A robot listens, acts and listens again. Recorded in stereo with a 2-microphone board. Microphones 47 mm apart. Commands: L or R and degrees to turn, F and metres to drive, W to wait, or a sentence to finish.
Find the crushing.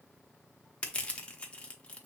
L30
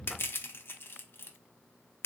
L120
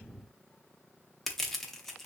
Found it: crushing, straight ahead.